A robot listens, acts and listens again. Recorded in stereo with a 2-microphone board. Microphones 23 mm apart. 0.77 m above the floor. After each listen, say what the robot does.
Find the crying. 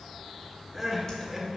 Turn 30° right.
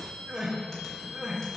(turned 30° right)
Turn 135° right.
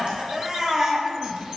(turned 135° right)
Turn 40° right.
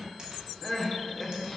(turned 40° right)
Turn 15° left.
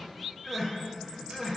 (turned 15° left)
Facing the crying, under 1 m away.